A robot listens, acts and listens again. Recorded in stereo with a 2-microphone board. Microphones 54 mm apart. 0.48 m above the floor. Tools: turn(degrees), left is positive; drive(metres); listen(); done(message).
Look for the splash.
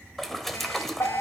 turn(degrees=30)
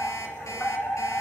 listen()
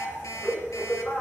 done("I heard a splash, but can't make it out now. It was about 30° right or 150° left.")